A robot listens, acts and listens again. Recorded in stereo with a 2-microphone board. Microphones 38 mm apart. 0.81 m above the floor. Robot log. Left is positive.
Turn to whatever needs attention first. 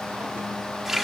cmd idle
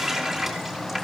cmd idle
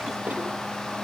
end: I can't make out anything urgent, only a running tap.